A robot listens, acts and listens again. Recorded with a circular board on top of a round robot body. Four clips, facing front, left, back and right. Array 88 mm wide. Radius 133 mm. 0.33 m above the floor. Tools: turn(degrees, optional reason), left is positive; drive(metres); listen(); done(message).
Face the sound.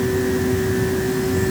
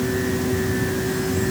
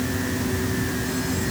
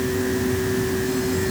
listen()
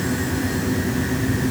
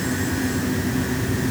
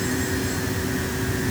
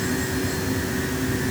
listen()
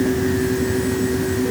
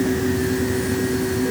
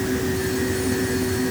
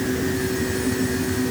done("I can't make out anything to turn to.")